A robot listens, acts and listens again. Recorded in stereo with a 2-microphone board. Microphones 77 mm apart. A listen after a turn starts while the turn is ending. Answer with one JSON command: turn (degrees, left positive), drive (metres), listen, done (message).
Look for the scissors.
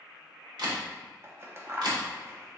{"turn": -35}
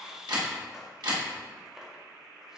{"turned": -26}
{"done": "Found it: scissors, straight ahead, under 1 m away."}